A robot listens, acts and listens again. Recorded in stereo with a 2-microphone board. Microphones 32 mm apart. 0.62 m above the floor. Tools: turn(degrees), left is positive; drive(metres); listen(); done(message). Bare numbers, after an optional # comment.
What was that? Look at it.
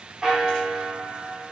# The bell: about 30° right or 150° right.
turn(-30)
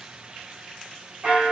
# So it is at 115° right.
turn(-115)
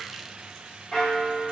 # The bell is now 25° left.
turn(25)
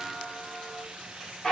# The bell is now 25° left.
turn(25)
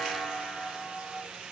done("Facing the bell, 1 to 2 m away.")